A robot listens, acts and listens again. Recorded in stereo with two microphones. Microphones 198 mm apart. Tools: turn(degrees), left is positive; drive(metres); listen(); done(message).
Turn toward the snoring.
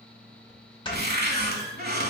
turn(degrees=25)
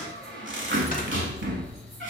listen()
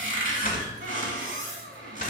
turn(degrees=125)
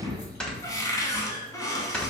done("Facing the snoring, 1 to 2 m away.")